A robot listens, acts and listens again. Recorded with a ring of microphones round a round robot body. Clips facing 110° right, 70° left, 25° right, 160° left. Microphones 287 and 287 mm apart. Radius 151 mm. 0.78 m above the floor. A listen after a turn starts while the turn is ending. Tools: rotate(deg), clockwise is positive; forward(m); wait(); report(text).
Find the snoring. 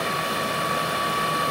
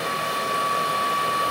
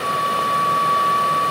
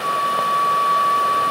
wait()
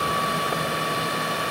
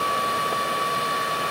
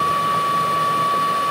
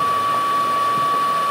wait()
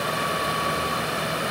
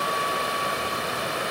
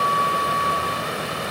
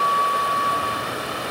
report("I can't make out snoring to turn to.")